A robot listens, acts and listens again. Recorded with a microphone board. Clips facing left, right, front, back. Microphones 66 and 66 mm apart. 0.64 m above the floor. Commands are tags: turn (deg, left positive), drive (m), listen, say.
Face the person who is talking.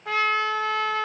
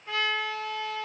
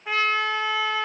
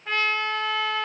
<listen/>
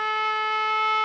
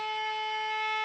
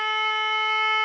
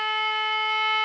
<listen/>
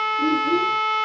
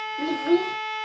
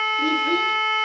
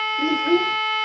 <turn deg="-115"/>
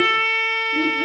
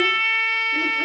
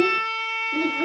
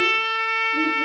<turn deg="-20"/>
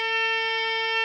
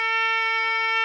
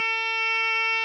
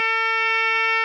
<listen/>
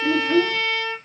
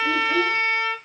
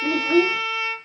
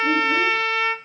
<say>Facing the child speaking, under 1 m away.</say>